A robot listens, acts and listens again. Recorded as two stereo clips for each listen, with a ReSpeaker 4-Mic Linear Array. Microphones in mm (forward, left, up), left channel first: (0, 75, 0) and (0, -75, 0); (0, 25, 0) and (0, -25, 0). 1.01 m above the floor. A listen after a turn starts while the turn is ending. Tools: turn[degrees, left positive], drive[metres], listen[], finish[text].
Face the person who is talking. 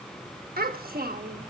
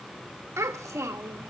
Action: turn[-90]
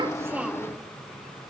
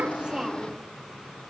Action: listen[]
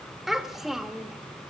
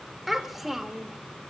Action: finish[Found it: a child speaking, straight ahead, 1 to 2 m away.]